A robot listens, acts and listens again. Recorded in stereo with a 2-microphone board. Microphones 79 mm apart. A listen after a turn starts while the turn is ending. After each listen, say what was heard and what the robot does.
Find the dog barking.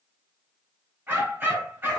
The dog barking: about 30° right or 150° right. Turn 30° right.
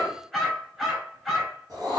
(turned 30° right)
Found it: a dog barking, straight ahead.